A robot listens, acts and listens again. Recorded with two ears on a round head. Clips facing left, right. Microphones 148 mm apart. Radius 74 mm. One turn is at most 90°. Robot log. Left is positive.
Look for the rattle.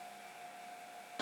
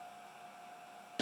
cmd idle
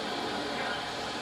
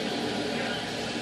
cmd idle
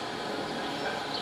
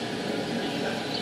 end: I can't make out a rattle to turn to.